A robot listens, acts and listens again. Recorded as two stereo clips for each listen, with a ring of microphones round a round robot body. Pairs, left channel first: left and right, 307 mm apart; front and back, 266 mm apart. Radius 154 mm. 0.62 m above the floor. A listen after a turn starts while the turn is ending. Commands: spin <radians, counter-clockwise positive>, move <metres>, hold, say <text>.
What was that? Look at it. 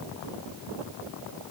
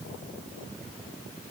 hold
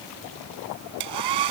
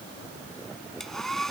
spin -1.57
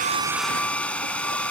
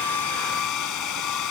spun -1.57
say Found it: a hair dryer, straight ahead.